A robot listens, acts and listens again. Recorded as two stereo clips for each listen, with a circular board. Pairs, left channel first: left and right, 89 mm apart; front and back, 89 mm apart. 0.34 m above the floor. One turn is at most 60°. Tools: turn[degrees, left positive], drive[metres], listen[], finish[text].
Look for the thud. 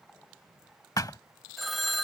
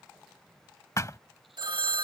Thought: The thud: 50° left.
Action: turn[50]
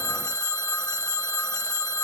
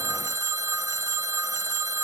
Action: finish[Facing where the thud came from. I can't hear it now.]